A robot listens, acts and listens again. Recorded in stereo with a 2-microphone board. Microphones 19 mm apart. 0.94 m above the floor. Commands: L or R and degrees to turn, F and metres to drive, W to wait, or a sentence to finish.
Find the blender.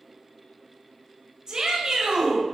W
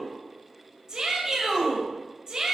W
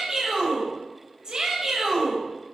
I can't make out a blender, only a shout.